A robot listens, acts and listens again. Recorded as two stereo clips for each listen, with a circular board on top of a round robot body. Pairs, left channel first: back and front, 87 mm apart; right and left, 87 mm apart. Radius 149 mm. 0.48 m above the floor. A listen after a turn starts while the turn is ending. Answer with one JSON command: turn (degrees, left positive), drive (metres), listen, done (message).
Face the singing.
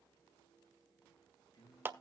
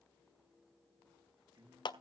{"turn": 130}
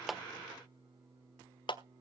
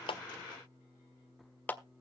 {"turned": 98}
{"turn": 35}
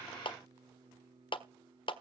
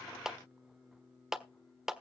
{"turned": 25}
{"done": "Found it: singing, straight ahead."}